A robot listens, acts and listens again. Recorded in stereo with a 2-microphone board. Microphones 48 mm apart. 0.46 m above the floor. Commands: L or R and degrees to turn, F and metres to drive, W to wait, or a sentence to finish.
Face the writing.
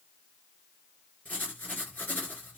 L40
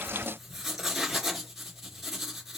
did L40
Facing the writing, 2 to 4 m away.